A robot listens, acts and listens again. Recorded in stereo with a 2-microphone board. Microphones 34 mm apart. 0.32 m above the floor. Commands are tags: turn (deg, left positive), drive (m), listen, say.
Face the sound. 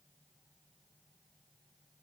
<listen/>
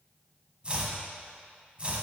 <turn deg="-30"/>
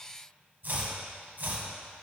<turn deg="-115"/>
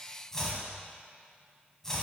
<turn deg="15"/>
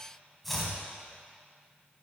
<say>Found it: chopping, straight ahead, 1 to 2 m away.</say>